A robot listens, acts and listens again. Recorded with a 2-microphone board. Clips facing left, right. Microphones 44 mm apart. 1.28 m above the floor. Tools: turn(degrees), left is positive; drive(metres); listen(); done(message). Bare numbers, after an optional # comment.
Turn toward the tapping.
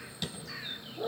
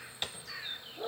# The tapping: about 35° right or 145° right.
turn(-35)
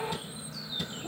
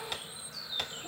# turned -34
# So it is at 105° right.
turn(-105)
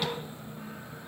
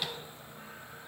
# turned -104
listen()
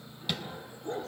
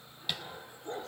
done("Facing the tapping.")